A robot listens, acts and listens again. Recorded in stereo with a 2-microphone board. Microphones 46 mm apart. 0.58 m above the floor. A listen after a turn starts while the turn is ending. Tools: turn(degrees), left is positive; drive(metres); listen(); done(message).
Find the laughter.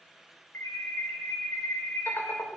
turn(degrees=55)
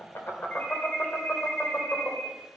turn(degrees=35)
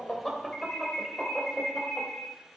done("Facing the laughter.")